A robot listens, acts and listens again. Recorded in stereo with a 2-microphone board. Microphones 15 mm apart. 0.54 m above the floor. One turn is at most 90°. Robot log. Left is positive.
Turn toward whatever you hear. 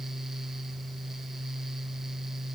cmd idle
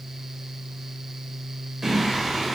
note: The singing: about 20° right or 160° right.
cmd yaw -20
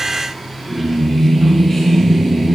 note: So it is at 15° left.
cmd yaw +15
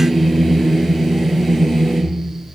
end: Found it: singing, straight ahead, 2 to 4 m away.